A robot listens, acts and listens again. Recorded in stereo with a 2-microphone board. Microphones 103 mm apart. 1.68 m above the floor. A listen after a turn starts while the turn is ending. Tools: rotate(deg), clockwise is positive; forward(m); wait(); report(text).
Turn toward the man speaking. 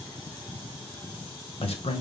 rotate(-70)
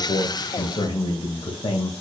rotate(-60)
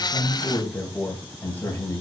rotate(-20)
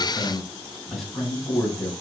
report("Facing the man speaking.")